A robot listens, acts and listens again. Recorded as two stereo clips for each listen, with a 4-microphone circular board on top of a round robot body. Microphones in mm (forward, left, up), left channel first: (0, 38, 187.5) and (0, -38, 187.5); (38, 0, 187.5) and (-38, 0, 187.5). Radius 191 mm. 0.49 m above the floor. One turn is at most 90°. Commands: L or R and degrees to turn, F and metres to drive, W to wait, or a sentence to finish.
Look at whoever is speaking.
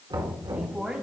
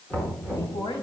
R15
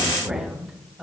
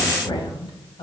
Facing the woman speaking, 2 to 4 m away.